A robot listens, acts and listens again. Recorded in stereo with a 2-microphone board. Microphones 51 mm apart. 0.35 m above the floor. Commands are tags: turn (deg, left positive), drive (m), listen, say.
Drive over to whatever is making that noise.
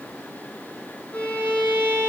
<turn deg="20"/>
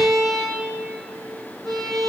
<drive m="1.0"/>
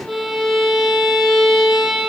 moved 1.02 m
<drive m="1.0"/>
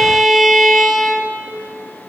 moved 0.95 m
<drive m="1.0"/>
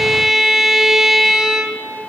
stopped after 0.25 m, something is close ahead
<say>Arrived at the violin, straight ahead.</say>